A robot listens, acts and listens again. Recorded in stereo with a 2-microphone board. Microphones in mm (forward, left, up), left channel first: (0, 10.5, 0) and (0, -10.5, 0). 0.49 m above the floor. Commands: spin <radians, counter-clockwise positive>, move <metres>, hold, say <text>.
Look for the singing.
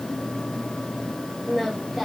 spin -0.52
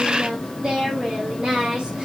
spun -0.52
spin -2.27
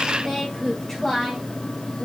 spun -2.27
spin 0.44
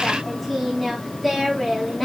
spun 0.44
say Found it: singing, straight ahead, over 4 m away.